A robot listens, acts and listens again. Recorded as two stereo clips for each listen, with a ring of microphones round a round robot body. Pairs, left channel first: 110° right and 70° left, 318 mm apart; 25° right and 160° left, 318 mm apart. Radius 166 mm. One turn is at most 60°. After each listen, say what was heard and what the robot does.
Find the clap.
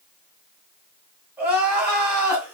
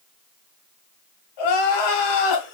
Keep listening.
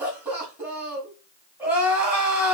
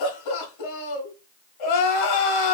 Keep listening.
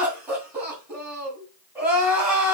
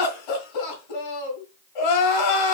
I can't make out a clap to turn to.